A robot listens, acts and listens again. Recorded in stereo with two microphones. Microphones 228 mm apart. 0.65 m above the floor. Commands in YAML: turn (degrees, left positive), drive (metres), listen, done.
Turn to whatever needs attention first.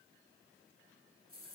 listen: true
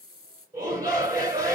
turn: -30
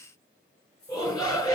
turn: 15
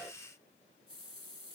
listen: true
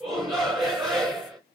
done: "Facing the shout, 2 to 4 m away."